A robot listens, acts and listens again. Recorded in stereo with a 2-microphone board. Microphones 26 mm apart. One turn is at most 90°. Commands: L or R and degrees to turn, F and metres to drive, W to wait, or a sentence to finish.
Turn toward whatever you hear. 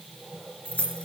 L60
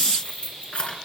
L45
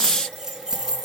R20
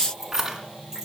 R20
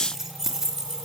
R15
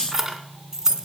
R20
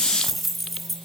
Found it: keys jangling, straight ahead.